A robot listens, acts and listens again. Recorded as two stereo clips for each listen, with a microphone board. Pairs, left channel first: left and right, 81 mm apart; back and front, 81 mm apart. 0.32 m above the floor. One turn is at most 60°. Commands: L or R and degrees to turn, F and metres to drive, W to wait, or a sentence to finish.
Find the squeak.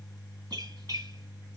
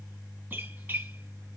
R60
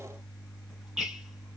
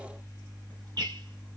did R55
R15
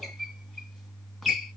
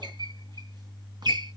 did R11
Facing the squeak.